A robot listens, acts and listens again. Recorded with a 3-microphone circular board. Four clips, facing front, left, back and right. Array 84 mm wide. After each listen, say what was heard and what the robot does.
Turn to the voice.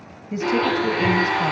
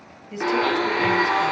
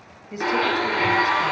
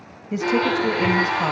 The woman speaking: 90° right. Turn 90° right.
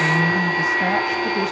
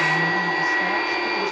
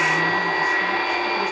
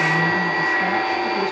Keep listening.
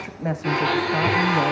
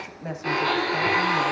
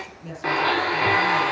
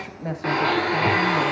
Facing the woman speaking.